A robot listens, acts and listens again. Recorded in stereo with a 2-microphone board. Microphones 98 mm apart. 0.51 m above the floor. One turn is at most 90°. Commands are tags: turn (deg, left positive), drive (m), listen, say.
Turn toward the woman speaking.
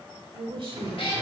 <turn deg="-55"/>
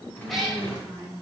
<turn deg="-50"/>
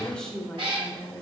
<turn deg="10"/>
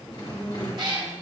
<say>Facing the woman speaking.</say>